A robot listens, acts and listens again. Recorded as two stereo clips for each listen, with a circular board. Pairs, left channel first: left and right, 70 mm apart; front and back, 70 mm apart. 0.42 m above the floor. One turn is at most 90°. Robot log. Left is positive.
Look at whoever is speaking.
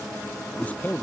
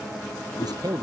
note: The man speaking: 160° left.
cmd yaw +90
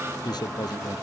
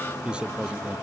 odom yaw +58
note: The man speaking is now 105° left.
cmd yaw +90
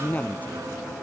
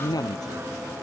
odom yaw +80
note: The man speaking is now 25° left.
cmd yaw +25
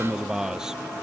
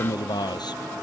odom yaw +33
note: The man speaking is now 10° right.
cmd yaw -10
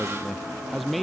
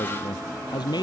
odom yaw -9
end: Found it: a man speaking, straight ahead.